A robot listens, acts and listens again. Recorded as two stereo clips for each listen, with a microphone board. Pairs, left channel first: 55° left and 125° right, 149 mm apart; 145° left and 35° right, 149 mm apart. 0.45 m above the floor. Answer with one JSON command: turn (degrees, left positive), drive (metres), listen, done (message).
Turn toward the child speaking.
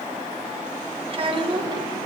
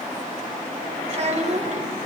{"turn": -70}
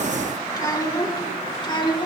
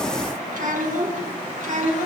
{"done": "Facing the child speaking."}